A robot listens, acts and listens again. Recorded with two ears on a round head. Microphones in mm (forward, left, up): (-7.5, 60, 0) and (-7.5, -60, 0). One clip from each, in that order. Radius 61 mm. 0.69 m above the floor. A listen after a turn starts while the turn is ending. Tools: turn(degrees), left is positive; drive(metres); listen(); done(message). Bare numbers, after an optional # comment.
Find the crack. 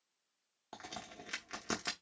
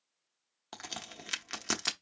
# The crack: about 60° right or 120° right.
turn(-60)
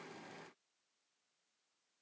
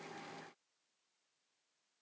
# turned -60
listen()
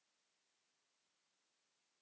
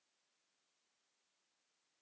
done("I heard a crack, but can't make it out now. It was about straight ahead or 60° right.")